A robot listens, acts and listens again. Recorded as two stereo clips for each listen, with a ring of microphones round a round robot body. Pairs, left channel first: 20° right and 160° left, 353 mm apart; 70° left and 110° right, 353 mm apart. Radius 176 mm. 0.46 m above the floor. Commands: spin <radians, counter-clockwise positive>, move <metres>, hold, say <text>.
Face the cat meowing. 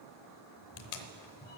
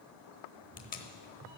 spin -1.31
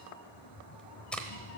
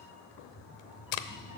spin -0.61
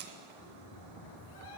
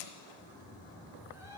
spin -0.52
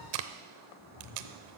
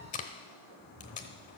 spin -0.17
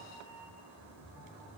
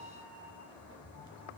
say Facing the cat meowing, 2 to 4 m away.